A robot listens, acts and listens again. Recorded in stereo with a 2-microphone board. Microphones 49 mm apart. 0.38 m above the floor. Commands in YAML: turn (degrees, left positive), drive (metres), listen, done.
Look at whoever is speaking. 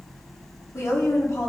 turn: 60
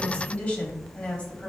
turn: 35
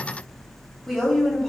turn: 15
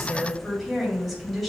done: "Facing the woman speaking."